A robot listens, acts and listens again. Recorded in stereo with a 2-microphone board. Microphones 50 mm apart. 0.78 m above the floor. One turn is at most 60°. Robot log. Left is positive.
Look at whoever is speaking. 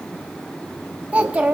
note: The child speaking: about 25° right or 155° right.
cmd yaw -25
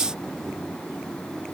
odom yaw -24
cmd idle
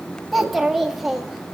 end: Found it: a child speaking, straight ahead, 1 to 2 m away.